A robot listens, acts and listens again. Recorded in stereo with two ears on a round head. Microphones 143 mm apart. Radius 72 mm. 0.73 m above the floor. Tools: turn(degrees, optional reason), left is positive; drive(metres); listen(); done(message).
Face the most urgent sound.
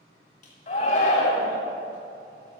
turn(degrees=45, reason="The shout: about 45° left or 135° left.")
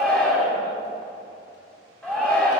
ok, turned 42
done("Facing the shout.")